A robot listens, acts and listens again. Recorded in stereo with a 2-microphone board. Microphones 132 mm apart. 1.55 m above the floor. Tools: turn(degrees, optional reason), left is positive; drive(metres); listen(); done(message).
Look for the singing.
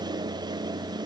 listen()
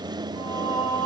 turn(degrees=35, reason="The singing: about 35° left or 145° left.")
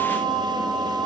done("Facing the singing.")